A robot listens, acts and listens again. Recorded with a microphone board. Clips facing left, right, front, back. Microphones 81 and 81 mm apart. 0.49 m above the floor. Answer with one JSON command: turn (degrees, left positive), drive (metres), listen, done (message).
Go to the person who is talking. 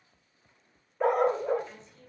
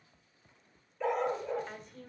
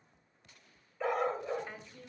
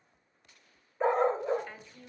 {"turn": -65}
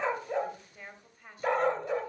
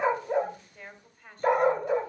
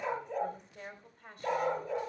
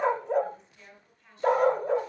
{"turn": 10}
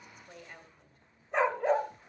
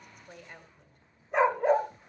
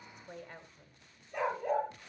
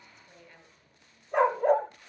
{"drive": 1.0}
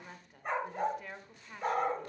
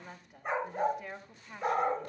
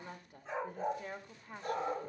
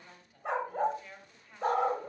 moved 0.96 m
{"drive": 1.0}
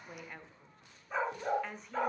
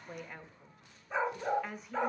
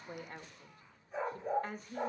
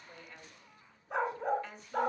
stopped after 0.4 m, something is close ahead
{"done": "I am next to the woman speaking."}